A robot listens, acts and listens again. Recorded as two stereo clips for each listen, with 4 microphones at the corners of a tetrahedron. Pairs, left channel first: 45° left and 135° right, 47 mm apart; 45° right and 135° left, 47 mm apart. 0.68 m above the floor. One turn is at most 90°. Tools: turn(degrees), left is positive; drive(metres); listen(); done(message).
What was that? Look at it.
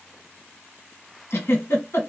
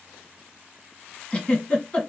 turn(degrees=25)
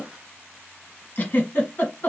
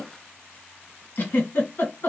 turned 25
done("Found it: a giggle, straight ahead, 1 to 2 m away.")